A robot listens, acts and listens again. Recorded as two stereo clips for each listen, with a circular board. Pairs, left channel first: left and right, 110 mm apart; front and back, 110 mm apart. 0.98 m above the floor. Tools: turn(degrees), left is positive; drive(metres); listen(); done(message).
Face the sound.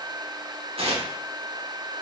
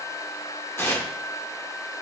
turn(degrees=-65)
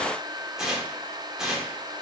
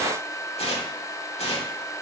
done("Facing the tearing paper.")